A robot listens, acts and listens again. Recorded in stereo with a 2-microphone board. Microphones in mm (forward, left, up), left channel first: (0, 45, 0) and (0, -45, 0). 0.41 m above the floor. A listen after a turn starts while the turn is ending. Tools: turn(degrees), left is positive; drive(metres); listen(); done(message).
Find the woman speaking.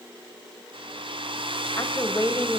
turn(degrees=45)
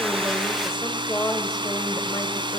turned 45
turn(degrees=40)
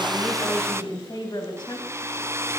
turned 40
turn(degrees=55)
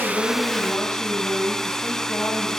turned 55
turn(degrees=25)
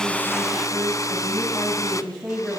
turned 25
done("Facing the woman speaking, 2 to 4 m away.")